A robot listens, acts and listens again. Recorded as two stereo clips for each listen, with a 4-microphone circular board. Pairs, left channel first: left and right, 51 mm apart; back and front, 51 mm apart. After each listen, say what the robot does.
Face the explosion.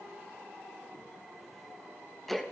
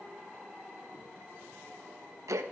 Keep listening.
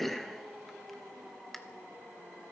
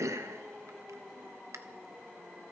Keep listening.
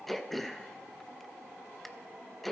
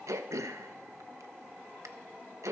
I can't make out an explosion, only throat clearing.